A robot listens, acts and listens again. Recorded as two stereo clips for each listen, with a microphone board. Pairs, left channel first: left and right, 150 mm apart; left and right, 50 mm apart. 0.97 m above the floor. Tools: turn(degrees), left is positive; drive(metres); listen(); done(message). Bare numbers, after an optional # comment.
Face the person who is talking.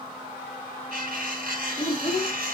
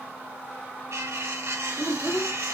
# The child speaking: about 30° left or 150° left.
turn(30)
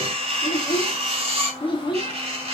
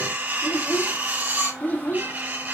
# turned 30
# The child speaking: about 30° left or 150° left.
turn(30)
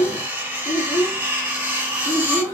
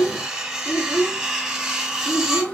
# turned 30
# The child speaking: about 20° left or 160° left.
turn(20)
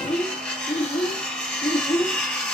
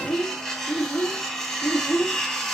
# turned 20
# The child speaking: about 40° left or 140° left.
turn(40)
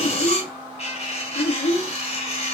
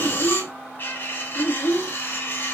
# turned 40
# So it is at 105° left.
turn(105)
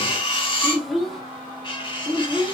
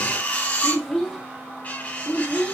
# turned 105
done("Facing the child speaking, 1 to 2 m away.")